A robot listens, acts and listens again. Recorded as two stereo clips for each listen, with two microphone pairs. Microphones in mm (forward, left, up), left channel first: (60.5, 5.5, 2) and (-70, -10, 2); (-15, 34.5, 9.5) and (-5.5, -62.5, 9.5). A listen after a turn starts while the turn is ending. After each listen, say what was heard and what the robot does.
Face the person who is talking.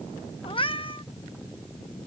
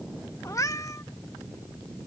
Keep listening.
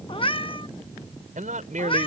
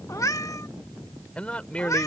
The man speaking: 175° left. Turn 175° left.
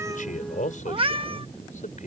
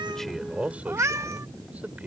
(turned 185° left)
The man speaking is now 10° right. Turn 10° right.
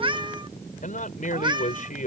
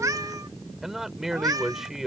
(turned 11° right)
Facing the man speaking.